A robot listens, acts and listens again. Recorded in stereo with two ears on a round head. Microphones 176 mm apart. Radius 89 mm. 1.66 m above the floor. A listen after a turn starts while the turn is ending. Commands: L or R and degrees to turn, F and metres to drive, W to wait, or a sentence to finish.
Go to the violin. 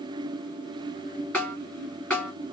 W
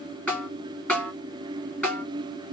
W
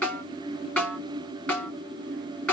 I can't make out a violin, only a snare drum.